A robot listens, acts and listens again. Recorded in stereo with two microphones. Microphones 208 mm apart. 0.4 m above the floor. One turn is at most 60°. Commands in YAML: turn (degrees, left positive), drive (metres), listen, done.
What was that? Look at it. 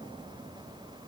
listen: true
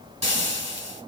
turn: -35
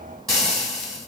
done: "Facing the frying."